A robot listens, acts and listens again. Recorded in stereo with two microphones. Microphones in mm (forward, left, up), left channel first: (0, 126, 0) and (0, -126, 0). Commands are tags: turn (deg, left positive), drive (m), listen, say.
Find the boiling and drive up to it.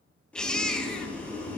<turn deg="30"/>
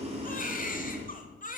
<turn deg="-25"/>
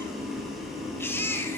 <drive m="1.0"/>
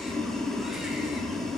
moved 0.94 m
<drive m="1.0"/>
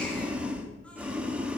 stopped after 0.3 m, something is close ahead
<say>I am next to the boiling.</say>